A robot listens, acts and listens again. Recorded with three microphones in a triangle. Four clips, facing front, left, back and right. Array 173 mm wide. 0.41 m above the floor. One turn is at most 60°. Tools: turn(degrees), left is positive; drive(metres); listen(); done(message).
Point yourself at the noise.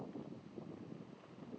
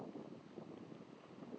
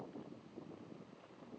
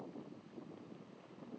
listen()
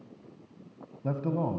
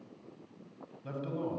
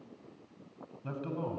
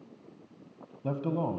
turn(degrees=-50)
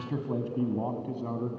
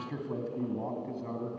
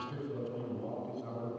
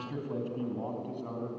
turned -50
turn(degrees=15)
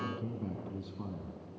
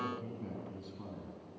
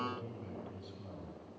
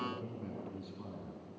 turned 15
done("Found it: a man speaking, straight ahead, 2 to 4 m away.")